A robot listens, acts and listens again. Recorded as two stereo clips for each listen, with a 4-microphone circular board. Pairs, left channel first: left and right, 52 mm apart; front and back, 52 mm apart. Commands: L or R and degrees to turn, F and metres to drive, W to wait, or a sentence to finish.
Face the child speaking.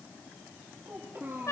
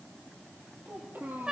R130
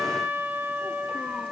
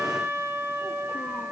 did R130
W
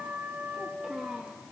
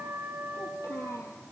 R15
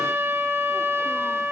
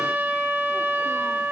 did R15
W
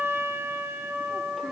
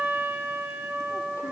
W
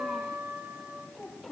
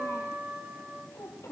Found it: a child speaking, straight ahead, over 4 m away.